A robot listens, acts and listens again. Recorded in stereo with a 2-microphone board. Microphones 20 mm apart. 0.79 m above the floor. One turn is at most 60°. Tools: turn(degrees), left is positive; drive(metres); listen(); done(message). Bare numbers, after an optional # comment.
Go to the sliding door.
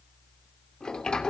# The sliding door: about 40° left or 140° left.
turn(40)
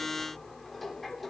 drive(1.0)
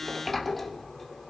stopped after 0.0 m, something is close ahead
done("Something is in my way. I am facing the sliding door but have not reached it.")